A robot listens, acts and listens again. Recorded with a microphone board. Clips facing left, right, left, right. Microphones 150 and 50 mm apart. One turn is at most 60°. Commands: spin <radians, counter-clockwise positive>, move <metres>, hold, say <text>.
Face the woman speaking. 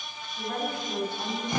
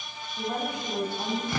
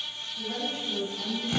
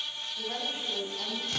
spin -0.35
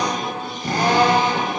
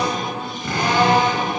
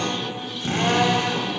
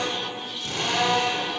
hold
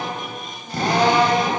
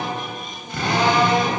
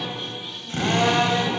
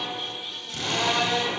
hold
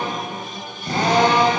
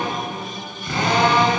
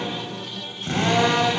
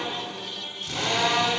say I heard a woman speaking, but can't make it out now. It was about straight ahead or 140° right.